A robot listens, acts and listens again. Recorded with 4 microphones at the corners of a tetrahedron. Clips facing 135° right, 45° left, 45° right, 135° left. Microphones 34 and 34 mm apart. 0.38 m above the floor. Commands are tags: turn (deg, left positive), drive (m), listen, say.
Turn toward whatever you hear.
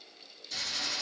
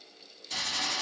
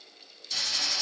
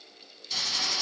<turn deg="60"/>
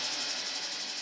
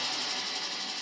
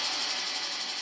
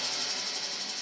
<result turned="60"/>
<say>Facing the hiss.</say>